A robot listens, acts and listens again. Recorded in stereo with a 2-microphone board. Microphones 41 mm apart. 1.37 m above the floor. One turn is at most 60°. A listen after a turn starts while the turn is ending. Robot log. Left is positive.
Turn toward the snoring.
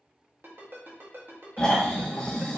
note: The snoring: about 15° left or 165° left.
cmd yaw +15
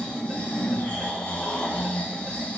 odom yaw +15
note: So it is at 150° left.
cmd yaw +60
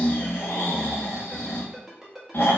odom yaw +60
note: The snoring is now 105° left.
cmd yaw +60
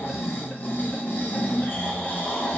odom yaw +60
note: The snoring is now 55° left.
cmd yaw +55
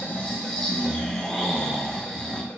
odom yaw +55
note: The snoring is now 15° left.
cmd yaw +15
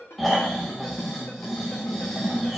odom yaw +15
end: Facing the snoring.